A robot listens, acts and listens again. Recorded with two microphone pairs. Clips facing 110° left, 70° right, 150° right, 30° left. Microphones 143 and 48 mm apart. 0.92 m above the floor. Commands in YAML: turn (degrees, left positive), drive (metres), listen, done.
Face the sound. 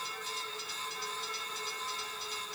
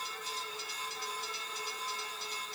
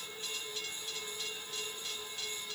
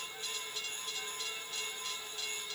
listen: true
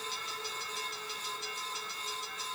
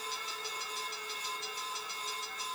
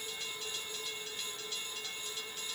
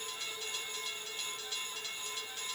listen: true
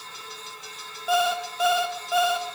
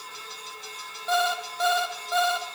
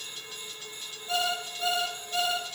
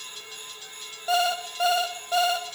turn: 30
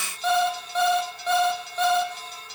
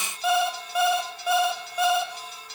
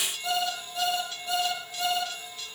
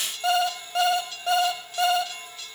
turn: 10
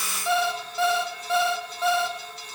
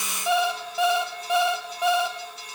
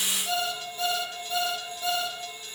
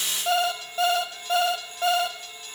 done: "Found it: an alarm clock, straight ahead."